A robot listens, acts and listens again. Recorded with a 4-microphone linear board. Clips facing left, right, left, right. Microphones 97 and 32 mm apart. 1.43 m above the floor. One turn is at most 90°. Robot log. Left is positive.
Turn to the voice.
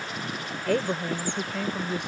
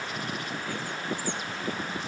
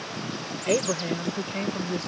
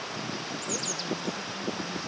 note: The woman speaking: about 70° left or 110° left.
cmd yaw +70
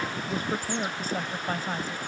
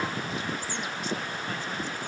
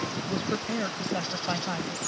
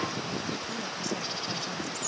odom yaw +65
note: So it is at 40° left.
cmd yaw +40
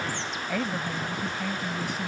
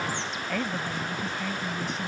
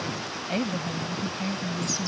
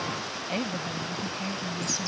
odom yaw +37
end: Found it: a woman speaking, straight ahead.